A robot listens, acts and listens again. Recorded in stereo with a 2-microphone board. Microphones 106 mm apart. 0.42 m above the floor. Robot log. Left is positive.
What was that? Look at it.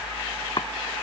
note: The chopping: about 50° left or 130° left.
cmd yaw +50
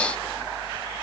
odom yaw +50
cmd idle
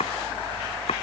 note: So it is at 75° left.
cmd yaw +75
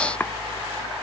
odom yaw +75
note: The chopping is now 20° left.
cmd yaw +20
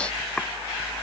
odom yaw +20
cmd idle
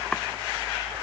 cmd idle
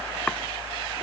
end: Facing where the chopping came from. I can't hear it now.